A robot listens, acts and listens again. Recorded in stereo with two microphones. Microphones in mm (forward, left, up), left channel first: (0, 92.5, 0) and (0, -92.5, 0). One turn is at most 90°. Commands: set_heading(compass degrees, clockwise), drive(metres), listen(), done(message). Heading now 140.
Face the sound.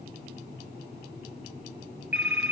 set_heading(170)
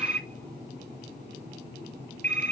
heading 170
set_heading(260)
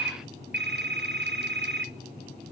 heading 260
set_heading(350)
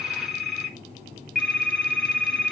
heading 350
done("Facing the phone ringing.")